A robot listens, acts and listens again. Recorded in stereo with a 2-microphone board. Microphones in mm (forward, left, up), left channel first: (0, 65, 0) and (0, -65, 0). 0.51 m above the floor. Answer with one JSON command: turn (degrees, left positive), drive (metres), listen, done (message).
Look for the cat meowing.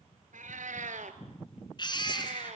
{"turn": -60}
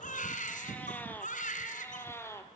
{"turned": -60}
{"turn": 20}
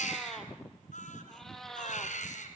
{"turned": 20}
{"done": "Facing the cat meowing, 2 to 4 m away."}